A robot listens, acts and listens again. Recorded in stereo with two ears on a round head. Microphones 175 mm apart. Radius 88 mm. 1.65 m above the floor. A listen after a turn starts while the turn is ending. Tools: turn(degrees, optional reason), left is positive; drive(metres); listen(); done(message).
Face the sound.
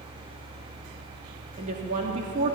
turn(degrees=-40, reason="The woman speaking: about 40° right or 140° right.")
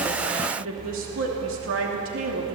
turn(degrees=-100, reason="So it is at 100° right.")
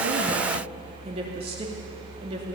turn(degrees=-30, reason="The woman speaking is now 30° right.")
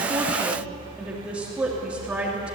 done("Facing the woman speaking, 2 to 4 m away.")